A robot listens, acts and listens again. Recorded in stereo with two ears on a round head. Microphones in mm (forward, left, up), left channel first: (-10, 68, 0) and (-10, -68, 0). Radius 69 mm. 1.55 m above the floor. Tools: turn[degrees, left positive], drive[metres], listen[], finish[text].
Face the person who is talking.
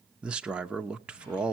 Action: turn[-30]
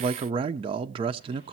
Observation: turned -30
Thought: So it is at 145° right.
Action: turn[-145]
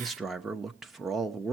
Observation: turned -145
Action: finish[Facing the man speaking.]